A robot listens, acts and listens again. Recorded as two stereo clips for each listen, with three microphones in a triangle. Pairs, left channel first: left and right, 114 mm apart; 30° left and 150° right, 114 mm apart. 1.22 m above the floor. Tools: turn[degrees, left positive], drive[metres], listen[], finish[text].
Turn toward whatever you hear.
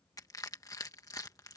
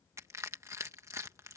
Thought: The crushing: 150° left.
Action: turn[150]
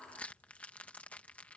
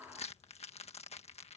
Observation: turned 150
Thought: The crushing is now 10° left.
Action: turn[10]
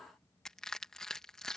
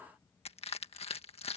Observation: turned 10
Action: finish[Found it: crushing, straight ahead.]